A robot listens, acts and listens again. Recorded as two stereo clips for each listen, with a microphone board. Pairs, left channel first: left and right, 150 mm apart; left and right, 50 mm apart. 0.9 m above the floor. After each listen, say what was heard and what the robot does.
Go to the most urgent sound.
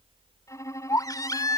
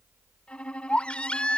The baby crying: about 25° left or 155° left. Turn 25° left.
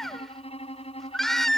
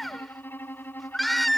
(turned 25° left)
Drive 1.0 m forward.
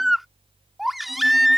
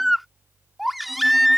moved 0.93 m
Drive 1.0 m forward.
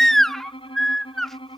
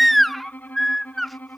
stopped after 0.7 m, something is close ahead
I am next to the baby crying.